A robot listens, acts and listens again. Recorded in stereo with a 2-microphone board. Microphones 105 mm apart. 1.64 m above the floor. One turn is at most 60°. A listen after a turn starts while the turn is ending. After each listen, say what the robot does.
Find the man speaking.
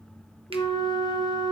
Keep listening.
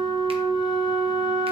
Keep listening.
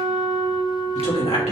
Turn 60° left.
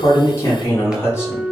Turn 25° left.
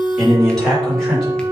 Facing the man speaking, over 4 m away.